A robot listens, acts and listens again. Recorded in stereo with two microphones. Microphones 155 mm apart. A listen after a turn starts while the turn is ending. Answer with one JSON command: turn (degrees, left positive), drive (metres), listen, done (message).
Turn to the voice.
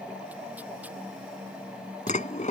{"listen": true}
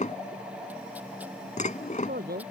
{"turn": -90}
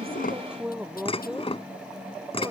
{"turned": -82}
{"done": "Found it: a man speaking, straight ahead."}